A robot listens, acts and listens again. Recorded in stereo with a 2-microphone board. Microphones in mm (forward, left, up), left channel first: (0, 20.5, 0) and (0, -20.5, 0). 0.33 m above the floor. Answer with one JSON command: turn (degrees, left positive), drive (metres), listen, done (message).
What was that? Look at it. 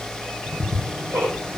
{"turn": -55}
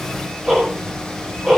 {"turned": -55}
{"done": "Found it: ticking, straight ahead, over 4 m away."}